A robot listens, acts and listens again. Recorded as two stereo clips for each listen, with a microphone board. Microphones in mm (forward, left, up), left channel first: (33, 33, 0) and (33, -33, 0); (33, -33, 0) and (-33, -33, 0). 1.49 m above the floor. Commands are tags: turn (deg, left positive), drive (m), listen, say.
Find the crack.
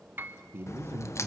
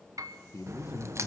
<turn deg="135"/>
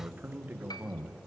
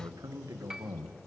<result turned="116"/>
<turn deg="20"/>
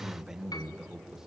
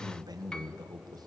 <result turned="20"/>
<say>Facing where the crack came from. I can't hear it now.</say>